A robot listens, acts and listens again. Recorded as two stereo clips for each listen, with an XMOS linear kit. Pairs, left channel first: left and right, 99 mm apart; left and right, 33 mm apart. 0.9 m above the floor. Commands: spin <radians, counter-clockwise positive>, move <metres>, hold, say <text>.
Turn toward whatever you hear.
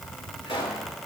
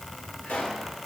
spin 1.31
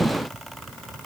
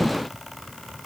hold
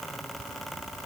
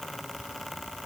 say I heard a pop, but can't make it out now. It was about straight ahead or 30° left.